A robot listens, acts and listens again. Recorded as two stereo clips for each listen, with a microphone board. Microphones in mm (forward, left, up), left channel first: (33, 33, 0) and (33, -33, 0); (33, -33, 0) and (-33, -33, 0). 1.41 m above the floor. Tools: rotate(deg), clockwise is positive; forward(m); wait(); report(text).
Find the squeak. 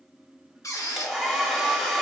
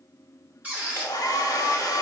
rotate(-115)
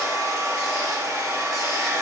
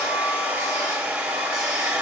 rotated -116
wait()
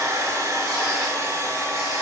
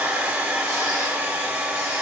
wait()
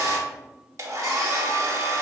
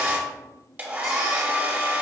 report("I heard a squeak from this way, but can't make it out now.")